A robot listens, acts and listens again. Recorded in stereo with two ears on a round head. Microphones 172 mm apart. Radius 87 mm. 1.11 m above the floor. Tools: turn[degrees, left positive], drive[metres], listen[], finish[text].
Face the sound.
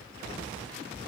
Action: listen[]
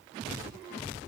Action: listen[]
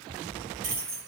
Thought: The keys jangling: about 40° right or 140° right.
Action: turn[-40]
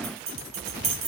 Thought: So it is at 100° right.
Action: turn[-100]
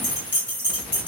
Action: finish[Facing the keys jangling.]